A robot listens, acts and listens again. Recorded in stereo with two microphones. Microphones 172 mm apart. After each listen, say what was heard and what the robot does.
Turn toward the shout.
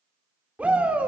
Turn 30° right.
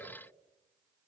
Keep listening.
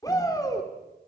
So it is at 20° left. Turn 20° left.
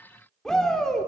Facing the shout.